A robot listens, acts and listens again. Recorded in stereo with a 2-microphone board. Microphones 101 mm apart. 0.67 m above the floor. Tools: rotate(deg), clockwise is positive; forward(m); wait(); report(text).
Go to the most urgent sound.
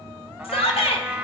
rotate(-70)
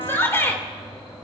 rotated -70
rotate(-25)
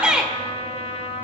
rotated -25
rotate(10)
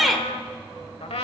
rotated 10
forward(1.0)
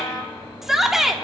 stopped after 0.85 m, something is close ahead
report("Arrived at the shout, straight ahead.")